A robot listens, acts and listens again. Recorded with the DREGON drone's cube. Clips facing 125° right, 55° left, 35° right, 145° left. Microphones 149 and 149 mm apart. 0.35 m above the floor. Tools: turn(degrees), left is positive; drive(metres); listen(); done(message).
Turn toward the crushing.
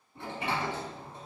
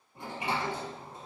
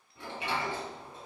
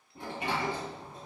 listen()
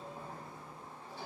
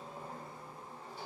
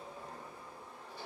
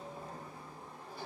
listen()
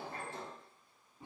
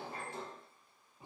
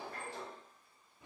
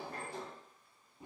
done("I can't make out crushing to turn to.")